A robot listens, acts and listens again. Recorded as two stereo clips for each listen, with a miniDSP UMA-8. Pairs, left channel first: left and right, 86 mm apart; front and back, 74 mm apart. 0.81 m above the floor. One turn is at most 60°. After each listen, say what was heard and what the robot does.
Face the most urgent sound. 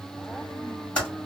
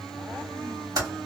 Keep listening.
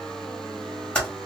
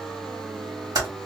Keep listening.
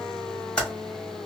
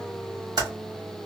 I can't make out anything urgent to turn to.